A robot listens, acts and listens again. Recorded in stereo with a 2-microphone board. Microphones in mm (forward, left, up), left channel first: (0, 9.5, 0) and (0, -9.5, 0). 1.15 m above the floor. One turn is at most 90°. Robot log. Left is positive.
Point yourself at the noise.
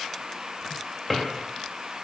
cmd yaw +30
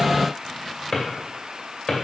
note: So it is at 145° left.
cmd yaw +90
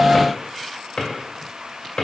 note: The drawer is now 45° left.
cmd yaw +45
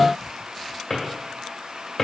note: The drawer is now 10° left.
cmd yaw +10
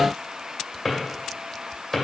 end: Facing the drawer.